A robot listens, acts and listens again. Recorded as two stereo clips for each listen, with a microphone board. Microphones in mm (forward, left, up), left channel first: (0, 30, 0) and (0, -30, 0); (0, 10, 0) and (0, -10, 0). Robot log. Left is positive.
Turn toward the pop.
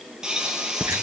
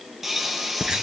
cmd yaw -30
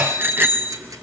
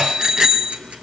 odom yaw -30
cmd idle
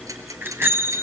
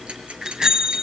end: I heard a pop, but can't make it out now. It was about 20° left or 140° right.